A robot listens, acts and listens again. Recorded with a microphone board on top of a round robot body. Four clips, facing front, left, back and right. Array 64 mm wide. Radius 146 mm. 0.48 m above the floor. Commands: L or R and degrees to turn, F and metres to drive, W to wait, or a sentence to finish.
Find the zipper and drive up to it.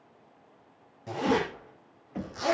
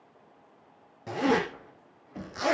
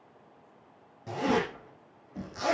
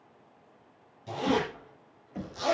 L85
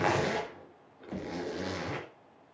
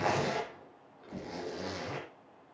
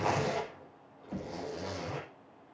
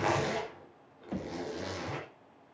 F1.0
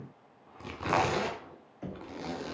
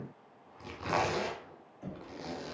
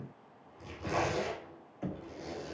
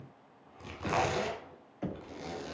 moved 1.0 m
L10
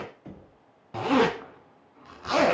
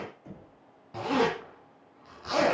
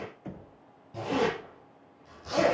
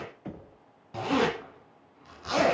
F1.0
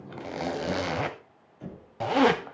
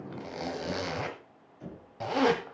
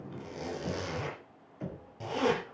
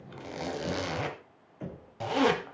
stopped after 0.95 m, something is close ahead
L10
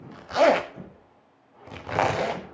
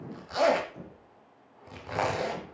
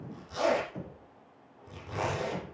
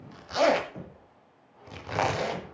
I am next to the zipper.